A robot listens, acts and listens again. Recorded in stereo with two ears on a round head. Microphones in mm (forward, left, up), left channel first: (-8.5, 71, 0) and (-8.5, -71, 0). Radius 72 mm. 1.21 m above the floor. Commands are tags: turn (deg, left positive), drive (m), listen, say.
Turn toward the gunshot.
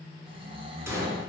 <turn deg="-15"/>
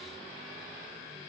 <listen/>
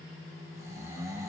<say>I heard a gunshot, but can't make it out now. It was about straight ahead or 150° right.</say>